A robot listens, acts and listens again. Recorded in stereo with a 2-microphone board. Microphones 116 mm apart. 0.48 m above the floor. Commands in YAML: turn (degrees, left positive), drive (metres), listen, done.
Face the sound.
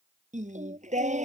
turn: -90
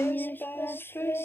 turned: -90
turn: 20
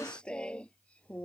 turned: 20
turn: 10
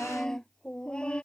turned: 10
turn: 10
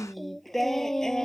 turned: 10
done: "Found it: singing, straight ahead."